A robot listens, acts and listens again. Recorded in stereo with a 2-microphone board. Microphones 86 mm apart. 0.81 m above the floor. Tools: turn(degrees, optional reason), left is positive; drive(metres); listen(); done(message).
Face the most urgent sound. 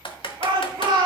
turn(degrees=-65, reason="The shout: about 65° right or 115° right.")
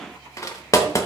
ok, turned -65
listen()
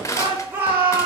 turn(degrees=-25, reason="So it is at 25° right.")
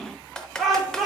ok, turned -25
done("Found it: a shout, straight ahead, 2 to 4 m away.")